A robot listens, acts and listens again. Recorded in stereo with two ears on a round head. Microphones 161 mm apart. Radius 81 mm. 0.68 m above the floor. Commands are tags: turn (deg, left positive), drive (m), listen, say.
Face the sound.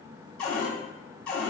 <turn deg="30"/>
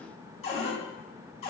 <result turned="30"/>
<turn deg="140"/>
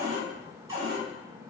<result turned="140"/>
<turn deg="-20"/>
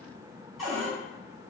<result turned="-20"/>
<say>Facing the cupboard door, 1 to 2 m away.</say>